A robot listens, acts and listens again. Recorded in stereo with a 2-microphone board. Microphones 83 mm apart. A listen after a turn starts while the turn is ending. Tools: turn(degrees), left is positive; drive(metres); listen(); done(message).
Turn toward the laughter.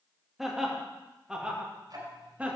turn(degrees=-15)
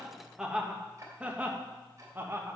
turn(degrees=-25)
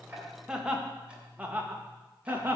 turn(degrees=-25)
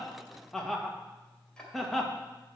done("Found it: laughter, straight ahead, 1 to 2 m away.")